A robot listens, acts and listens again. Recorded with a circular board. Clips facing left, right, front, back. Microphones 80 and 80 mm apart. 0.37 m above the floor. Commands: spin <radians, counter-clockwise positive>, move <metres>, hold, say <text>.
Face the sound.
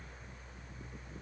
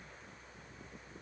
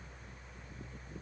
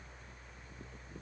hold
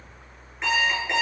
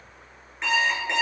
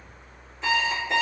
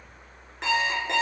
spin 3.05
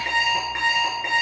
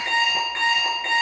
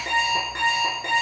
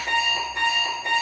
spin 0.26
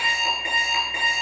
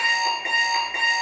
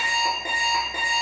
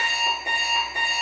say Facing the alarm clock.